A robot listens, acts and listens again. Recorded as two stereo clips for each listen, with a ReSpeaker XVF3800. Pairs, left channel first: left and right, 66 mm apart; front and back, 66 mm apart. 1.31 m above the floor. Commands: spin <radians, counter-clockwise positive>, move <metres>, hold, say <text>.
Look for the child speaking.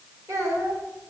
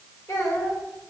spin -0.79
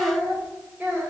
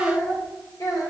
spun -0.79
spin -0.35
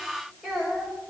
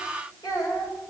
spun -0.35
say Facing the child speaking.